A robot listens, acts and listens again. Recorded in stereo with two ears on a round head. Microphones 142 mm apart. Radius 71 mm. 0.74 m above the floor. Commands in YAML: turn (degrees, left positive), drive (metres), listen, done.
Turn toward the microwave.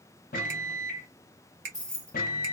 turn: 55
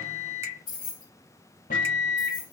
turn: 60
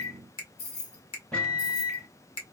done: "Found it: a microwave, straight ahead, under 1 m away."